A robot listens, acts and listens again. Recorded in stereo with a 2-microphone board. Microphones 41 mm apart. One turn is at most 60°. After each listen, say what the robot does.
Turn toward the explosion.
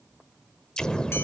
Turn 20° left.
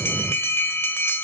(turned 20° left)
Facing the explosion.